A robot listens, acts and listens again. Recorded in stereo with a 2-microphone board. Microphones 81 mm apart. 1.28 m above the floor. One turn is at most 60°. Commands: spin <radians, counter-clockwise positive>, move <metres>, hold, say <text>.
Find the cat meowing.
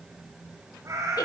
spin -0.70
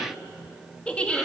hold
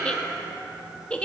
spin -0.17
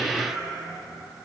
say Facing the cat meowing, over 4 m away.